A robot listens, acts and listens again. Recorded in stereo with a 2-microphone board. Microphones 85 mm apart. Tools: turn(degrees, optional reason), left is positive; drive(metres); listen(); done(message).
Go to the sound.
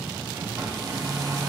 turn(degrees=-45, reason="The hair dryer: about 45° right or 135° right.")
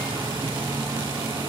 turn(degrees=-85, reason="So it is at 85° right.")
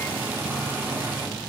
turn(degrees=-20, reason="The hair dryer is now 20° right.")
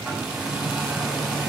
turn(degrees=-10, reason="The hair dryer is now 10° right.")
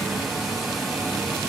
drive(metres=1.0)
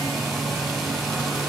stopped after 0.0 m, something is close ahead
done("Blocked. The hair dryer is further on, straight ahead.")